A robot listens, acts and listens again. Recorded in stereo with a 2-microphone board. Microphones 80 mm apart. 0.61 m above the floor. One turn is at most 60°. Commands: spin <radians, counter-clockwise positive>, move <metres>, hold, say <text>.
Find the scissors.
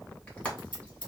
spin 1.05
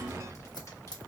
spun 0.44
spin 1.05
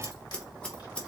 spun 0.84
spin 0.26
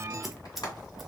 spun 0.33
say Facing the scissors, under 1 m away.